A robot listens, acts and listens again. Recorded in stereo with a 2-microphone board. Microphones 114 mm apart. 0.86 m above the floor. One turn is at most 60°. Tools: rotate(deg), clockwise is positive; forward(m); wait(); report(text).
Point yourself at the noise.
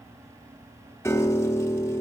rotate(-25)
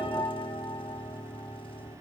rotate(-60)
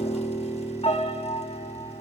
rotate(-60)
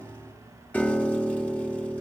rotate(-10)
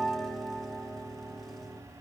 report("Facing the piano.")